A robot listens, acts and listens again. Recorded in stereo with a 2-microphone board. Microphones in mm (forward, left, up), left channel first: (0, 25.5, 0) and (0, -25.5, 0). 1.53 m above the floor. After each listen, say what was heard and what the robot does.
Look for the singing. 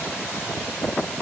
Keep listening.
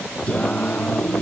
The singing: about 25° left or 155° left. Turn 25° left.
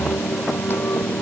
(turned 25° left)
So it is at 135° left. Turn 135° left.
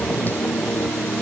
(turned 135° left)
The singing is now 35° left. Turn 35° left.
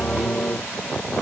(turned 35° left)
The singing is now 20° left. Turn 20° left.
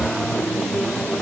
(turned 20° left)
Facing the singing.